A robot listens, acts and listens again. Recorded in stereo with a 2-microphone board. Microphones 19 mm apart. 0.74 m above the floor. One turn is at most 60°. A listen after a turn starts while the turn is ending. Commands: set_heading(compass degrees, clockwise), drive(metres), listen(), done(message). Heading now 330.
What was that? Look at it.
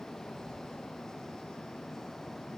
listen()
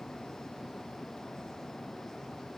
listen()
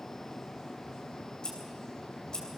set_heading(280)
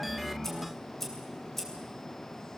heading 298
set_heading(278)
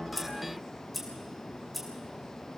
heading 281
done("Found it: scissors, straight ahead.")